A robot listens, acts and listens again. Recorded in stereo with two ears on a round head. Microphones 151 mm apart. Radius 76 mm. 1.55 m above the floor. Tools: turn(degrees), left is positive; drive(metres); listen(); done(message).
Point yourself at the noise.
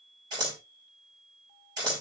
turn(degrees=-25)
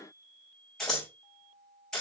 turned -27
done("Facing the scissors.")